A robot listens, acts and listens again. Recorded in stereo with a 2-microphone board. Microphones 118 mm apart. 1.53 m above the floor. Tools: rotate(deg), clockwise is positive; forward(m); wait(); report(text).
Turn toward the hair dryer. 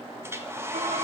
rotate(20)
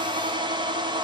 rotate(140)
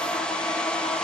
report("Found it: a hair dryer, straight ahead.")